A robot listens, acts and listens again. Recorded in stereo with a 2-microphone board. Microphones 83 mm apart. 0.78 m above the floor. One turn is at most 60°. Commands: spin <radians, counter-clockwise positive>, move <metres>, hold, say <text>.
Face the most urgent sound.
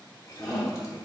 spin 0.52
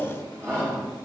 spin -0.61
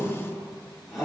say Found it: a shout, straight ahead, 1 to 2 m away.